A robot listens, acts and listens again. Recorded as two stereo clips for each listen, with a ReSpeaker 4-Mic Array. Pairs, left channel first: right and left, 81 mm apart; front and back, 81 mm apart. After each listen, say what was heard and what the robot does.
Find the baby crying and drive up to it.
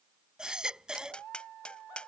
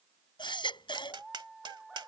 The baby crying: 10° left. Turn 10° left.
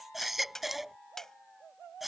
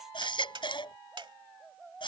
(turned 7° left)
Drive 1.0 m forward.
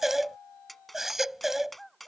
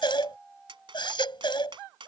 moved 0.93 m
Drive 1.0 m forward.
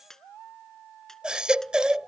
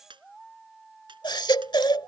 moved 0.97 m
The baby crying is now 10° left. Turn 10° left.
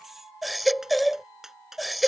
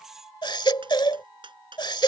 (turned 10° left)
Drive 1.0 m forward.
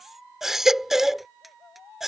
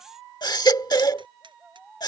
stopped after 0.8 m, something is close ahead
I am next to the baby crying.